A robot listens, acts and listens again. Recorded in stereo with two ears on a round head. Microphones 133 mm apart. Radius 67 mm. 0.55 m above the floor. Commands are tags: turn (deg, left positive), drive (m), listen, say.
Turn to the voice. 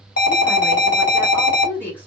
<turn deg="30"/>
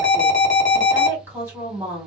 <turn deg="-20"/>
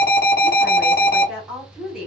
<say>Facing the woman speaking.</say>